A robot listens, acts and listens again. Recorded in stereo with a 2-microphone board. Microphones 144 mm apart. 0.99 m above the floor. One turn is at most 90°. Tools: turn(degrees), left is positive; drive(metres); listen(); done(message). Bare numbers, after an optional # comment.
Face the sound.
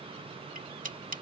# The cutlery clinking: about 65° right or 115° right.
turn(-65)
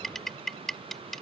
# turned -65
done("Facing the cutlery clinking.")